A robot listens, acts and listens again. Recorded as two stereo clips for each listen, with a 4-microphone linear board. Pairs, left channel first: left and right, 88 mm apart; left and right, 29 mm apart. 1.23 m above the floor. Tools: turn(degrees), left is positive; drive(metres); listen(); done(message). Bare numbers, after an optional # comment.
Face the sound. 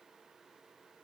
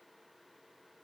listen()
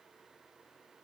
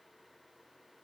listen()
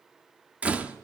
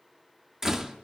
# The door slam: about 20° right or 160° right.
turn(-20)
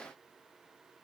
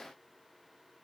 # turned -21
listen()
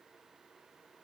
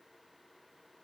done("I heard a door slam, but can't make it out now. It was about 5° left or 140° right.")